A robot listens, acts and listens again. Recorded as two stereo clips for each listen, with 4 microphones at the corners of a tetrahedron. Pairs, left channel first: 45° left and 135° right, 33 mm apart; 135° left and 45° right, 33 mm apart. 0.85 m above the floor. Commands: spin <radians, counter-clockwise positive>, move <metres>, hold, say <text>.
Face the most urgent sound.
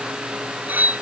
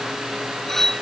hold
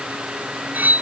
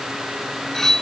hold
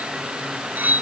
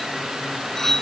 say I can't make out anything urgent, only cutlery clinking.